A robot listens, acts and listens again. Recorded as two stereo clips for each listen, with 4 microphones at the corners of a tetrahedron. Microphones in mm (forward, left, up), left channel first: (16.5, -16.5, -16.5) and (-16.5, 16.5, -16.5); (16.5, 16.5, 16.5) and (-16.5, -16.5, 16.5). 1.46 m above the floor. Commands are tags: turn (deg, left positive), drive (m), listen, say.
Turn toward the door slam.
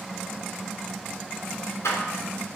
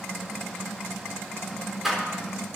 <turn deg="-50"/>
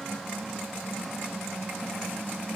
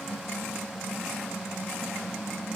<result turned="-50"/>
<say>I heard a door slam from this way, but can't make it out now.</say>